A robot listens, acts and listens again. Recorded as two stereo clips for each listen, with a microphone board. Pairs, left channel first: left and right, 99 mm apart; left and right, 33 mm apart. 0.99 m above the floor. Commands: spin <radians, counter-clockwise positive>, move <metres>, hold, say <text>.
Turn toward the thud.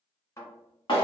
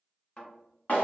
spin 0.52
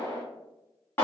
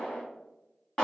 hold
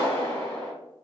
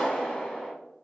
say I heard a thud, but can't make it out now. It was about straight ahead or 120° left.